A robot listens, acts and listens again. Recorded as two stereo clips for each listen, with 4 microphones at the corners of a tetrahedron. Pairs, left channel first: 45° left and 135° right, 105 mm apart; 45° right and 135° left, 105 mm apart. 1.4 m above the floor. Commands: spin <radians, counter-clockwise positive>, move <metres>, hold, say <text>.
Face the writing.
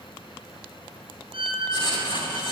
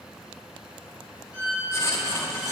spin 0.26
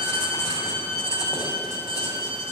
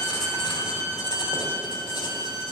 say Found it: writing, straight ahead, 2 to 4 m away.